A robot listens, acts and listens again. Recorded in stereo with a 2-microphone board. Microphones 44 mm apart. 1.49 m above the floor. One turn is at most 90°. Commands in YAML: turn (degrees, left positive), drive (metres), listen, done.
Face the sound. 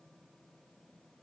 listen: true
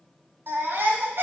turn: -60
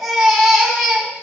done: "Facing the baby crying, 2 to 4 m away."